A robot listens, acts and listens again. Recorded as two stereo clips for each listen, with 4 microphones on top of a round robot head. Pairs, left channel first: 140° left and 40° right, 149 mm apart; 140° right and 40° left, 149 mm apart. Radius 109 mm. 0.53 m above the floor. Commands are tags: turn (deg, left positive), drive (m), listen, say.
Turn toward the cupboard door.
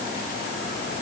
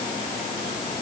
<listen/>
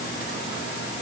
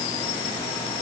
<listen/>
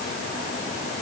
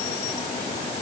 <say>I can't make out a cupboard door.</say>